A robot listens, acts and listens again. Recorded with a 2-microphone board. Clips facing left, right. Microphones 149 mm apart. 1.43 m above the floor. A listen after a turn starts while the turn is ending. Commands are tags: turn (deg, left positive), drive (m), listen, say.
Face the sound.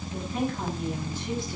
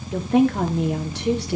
<turn deg="-90"/>
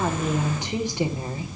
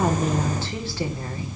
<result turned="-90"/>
<turn deg="20"/>
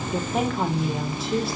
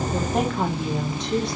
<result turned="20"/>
<say>Facing the woman speaking, 2 to 4 m away.</say>